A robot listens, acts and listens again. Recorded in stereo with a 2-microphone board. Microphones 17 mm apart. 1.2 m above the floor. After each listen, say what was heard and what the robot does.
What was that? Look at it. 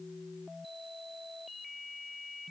Keep listening.
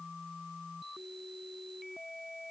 Keep listening.
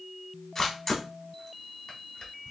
The camera shutter: about 25° left or 155° left. Turn 25° left.
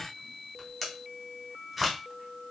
Facing the camera shutter.